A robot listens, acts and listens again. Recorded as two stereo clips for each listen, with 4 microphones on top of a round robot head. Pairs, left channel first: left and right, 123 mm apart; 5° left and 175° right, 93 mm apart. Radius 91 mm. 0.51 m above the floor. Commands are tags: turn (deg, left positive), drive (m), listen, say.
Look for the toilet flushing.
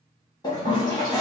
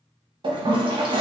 <turn deg="155"/>
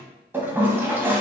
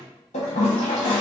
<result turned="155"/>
<turn deg="-15"/>
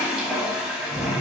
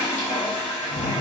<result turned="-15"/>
<say>Facing the toilet flushing, under 1 m away.</say>